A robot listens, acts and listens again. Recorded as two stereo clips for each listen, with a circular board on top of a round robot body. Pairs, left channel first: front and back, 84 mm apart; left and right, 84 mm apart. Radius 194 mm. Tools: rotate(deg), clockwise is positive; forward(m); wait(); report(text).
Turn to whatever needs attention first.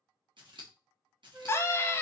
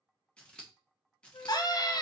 rotate(-60)
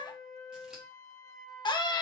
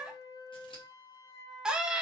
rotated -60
rotate(10)
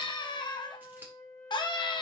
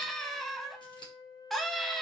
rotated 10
report("Facing the scream.")